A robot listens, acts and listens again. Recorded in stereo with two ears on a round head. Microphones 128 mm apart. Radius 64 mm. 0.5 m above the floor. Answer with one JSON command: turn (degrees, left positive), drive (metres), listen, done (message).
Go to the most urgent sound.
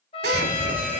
{"turn": -30}
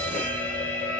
{"turn": 15}
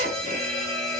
{"drive": 1.0}
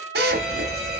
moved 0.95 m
{"drive": 1.0}
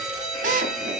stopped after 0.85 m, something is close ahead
{"done": "I am next to the fire alarm."}